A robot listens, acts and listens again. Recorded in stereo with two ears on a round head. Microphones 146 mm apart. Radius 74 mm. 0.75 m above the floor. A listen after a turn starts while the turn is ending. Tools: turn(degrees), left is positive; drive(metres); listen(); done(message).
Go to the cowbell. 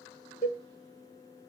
turn(degrees=25)
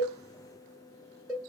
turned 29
drive(metres=1.0)
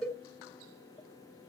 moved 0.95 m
drive(metres=1.0)
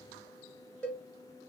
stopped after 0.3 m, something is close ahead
done("Arrived at the cowbell, straight ahead.")